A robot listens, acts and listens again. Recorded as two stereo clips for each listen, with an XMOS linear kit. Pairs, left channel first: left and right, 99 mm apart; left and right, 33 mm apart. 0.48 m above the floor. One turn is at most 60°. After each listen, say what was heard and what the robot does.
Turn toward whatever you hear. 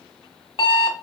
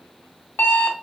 Turn 60° left.
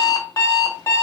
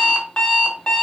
So it is at 35° left. Turn 35° left.
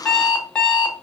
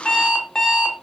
The alarm clock is now 10° left. Turn 10° left.
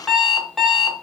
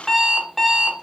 Found it: an alarm clock, straight ahead.